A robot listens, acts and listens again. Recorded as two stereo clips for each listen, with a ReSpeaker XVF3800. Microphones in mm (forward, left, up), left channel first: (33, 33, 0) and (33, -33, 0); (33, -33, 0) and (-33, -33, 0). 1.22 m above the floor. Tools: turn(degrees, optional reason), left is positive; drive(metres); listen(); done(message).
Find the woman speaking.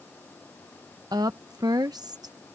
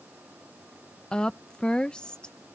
turn(degrees=-75, reason="The woman speaking: 75° right.")
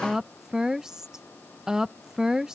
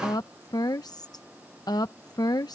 turn(degrees=-10, reason="The woman speaking is now 10° right.")
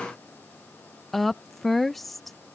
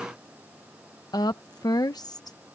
done("Facing the woman speaking.")